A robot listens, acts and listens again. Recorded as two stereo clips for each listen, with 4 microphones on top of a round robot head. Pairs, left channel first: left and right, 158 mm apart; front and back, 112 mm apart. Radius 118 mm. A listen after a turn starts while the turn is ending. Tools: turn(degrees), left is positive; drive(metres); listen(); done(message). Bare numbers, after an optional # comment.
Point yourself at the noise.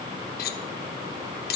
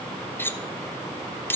# The cutlery clinking: 70° left.
turn(70)
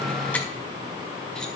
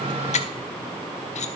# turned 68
listen()
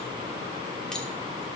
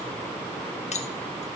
done("Facing the cutlery clinking.")